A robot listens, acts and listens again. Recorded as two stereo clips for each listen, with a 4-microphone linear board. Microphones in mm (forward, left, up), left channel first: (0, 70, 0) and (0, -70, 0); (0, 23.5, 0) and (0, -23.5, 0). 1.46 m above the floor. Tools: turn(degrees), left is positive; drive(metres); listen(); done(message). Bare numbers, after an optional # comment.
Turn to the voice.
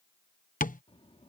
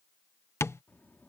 # The child speaking: about 40° left or 140° left.
turn(40)
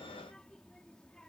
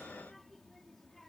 done("Found it: a child speaking, straight ahead.")